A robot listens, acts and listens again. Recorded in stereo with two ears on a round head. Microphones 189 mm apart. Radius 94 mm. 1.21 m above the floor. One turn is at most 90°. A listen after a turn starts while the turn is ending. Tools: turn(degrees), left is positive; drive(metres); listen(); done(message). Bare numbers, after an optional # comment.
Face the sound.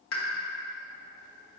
# The pop: about 70° left or 110° left.
turn(70)
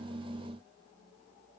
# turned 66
listen()
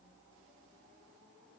done("I heard a pop, but can't make it out now. It was about 5° left or 45° left.")